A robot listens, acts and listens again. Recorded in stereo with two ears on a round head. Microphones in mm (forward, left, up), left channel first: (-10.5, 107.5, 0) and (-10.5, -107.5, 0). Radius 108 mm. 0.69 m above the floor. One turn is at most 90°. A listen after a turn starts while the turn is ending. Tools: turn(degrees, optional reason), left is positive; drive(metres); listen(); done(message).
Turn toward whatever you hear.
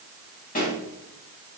turn(degrees=35, reason="The pop: about 35° left or 145° left.")
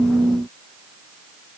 listen()
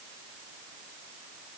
done("I heard a pop, but can't make it out now. It was about straight ahead or 110° left.")